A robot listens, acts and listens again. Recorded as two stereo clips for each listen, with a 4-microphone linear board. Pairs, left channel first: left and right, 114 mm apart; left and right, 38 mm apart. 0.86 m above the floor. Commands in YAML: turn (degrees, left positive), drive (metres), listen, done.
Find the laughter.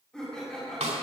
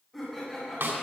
turn: 30
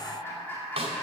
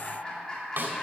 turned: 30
turn: 165
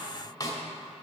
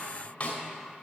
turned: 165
listen: true
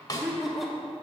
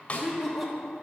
done: "Facing the laughter."